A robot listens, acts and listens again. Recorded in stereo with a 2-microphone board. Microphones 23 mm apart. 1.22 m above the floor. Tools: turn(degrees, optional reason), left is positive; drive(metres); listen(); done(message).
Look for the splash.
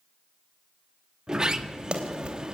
turn(degrees=-40, reason="The splash: about 40° right or 140° right.")
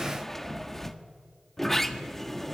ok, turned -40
listen()
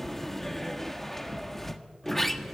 done("I heard a splash, but can't make it out now. It was about straight ahead or 100° right.")